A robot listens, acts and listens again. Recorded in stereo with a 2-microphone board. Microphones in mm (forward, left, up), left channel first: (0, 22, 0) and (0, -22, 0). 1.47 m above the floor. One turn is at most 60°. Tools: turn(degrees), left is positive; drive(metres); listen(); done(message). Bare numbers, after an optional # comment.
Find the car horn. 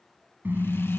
# The car horn: about 50° right or 130° right.
turn(-50)
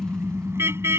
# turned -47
# So it is at 85° right.
turn(-60)
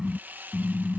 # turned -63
# The car horn is now 20° right.
turn(-20)
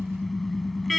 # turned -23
done("Found it: a car horn, straight ahead.")